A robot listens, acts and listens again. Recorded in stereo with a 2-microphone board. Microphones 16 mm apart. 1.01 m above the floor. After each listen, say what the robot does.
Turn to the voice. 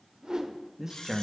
Turn 25° right.
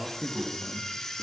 Found it: a man speaking, straight ahead.